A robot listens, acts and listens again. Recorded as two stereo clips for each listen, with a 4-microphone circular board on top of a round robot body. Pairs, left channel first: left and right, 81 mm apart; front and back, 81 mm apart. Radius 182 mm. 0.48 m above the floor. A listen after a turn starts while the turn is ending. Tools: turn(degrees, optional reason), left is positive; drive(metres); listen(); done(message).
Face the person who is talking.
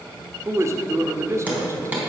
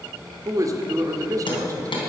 turn(degrees=-140, reason="The man speaking: 140° right.")
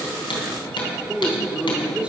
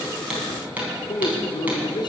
turn(degrees=-15, reason="The man speaking is now 15° right.")
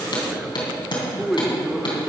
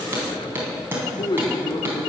done("Facing the man speaking, 1 to 2 m away.")